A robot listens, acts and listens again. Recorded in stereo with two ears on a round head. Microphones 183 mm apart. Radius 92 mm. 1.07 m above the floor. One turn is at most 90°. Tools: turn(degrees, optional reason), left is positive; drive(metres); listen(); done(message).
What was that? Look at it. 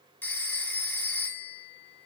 turn(degrees=30)
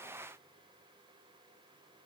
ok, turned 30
listen()
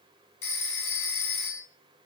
turn(degrees=90, reason="So it is at 145° left.")
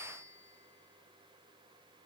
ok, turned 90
turn(degrees=55, reason="Nothing new. It was at 55° left.")
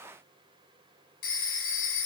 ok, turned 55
turn(degrees=45, reason="The phone ringing is now 45° left.")
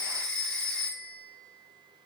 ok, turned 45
done("Found it: a phone ringing, straight ahead.")